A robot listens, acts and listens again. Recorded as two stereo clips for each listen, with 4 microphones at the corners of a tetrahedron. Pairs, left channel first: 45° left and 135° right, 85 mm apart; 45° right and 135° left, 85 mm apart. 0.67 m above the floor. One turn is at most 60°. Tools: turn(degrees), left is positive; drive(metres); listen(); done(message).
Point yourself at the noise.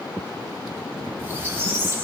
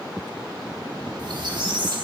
turn(degrees=60)
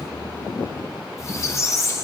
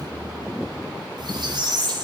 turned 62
turn(degrees=60)
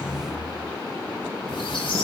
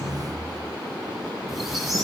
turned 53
turn(degrees=45)
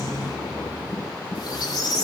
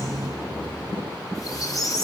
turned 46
done("Facing the squeak, 1 to 2 m away.")